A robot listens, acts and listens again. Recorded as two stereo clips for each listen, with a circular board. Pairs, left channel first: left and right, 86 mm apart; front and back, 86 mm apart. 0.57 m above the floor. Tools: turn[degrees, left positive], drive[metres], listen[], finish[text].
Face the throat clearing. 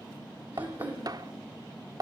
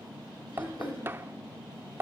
Thought: The throat clearing: 20° right.
Action: turn[-20]
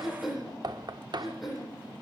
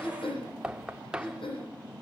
Action: finish[Facing the throat clearing, over 4 m away.]